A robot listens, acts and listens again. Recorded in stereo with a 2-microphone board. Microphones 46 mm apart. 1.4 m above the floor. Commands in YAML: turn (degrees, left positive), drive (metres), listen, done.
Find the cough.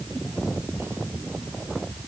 listen: true
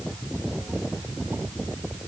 listen: true
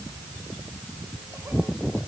done: "I can't make out a cough to turn to."